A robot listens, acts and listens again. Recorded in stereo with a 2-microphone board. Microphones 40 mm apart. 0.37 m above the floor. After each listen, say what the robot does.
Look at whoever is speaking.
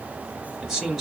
Turn 30° left.
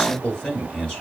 Turn 150° left.
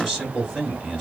Turn 20° right.
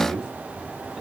Turn 10° right.
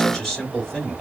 Facing the man speaking, 2 to 4 m away.